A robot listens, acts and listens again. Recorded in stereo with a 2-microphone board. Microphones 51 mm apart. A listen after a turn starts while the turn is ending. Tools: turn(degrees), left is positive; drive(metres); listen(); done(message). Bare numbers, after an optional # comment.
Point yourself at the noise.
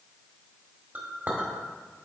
# The clink: about 35° right or 145° right.
turn(-35)
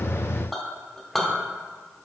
done("Found it: a clink, straight ahead, 1 to 2 m away.")